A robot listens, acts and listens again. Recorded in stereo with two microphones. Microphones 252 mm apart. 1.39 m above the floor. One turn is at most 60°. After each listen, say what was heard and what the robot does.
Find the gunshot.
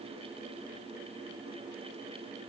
Keep listening.
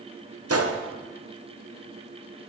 The gunshot: about 70° right or 110° right. Turn 60° right.
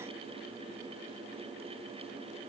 Keep listening.
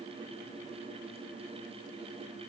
I heard a gunshot, but can't make it out now. It was about 10° right or 50° right.